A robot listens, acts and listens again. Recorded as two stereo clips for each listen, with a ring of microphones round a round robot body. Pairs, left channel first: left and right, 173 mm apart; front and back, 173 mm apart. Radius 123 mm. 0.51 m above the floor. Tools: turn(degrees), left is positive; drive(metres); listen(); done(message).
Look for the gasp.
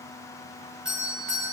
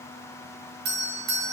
listen()
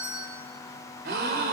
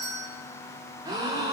turn(degrees=-110)
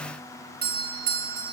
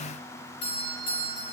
done("I heard a gasp from this way, but can't make it out now.")